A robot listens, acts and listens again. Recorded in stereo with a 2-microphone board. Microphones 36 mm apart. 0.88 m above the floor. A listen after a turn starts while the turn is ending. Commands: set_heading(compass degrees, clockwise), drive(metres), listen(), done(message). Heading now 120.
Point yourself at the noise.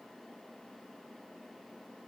listen()
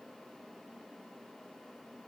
listen()
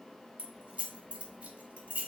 set_heading(155)
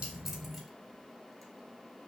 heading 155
listen()
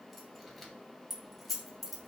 done("Facing the keys jangling, under 1 m away.")